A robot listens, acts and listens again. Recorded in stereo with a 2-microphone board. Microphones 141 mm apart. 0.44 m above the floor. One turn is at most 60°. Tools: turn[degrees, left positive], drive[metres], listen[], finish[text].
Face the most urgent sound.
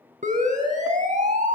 Thought: The siren: about 75° right or 105° right.
Action: turn[-60]
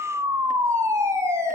Thought: So it is at 20° right.
Action: turn[-20]
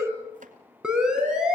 Action: finish[Found it: a siren, straight ahead.]